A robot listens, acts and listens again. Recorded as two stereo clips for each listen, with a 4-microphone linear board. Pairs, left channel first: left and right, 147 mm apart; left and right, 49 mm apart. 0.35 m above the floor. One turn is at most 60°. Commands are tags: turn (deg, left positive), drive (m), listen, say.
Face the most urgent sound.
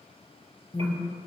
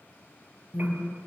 <turn deg="45"/>
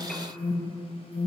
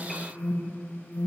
<turn deg="60"/>
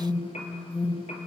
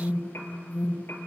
<turn deg="35"/>
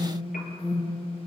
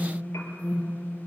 <say>Facing the alarm.</say>